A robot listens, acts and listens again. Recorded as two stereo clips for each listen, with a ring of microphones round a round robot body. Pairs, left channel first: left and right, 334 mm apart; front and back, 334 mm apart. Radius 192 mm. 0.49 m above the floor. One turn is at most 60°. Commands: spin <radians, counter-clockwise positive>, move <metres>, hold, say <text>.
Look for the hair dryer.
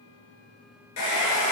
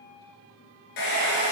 spin 0.61
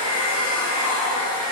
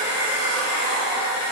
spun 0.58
say Found it: a hair dryer, straight ahead, 1 to 2 m away.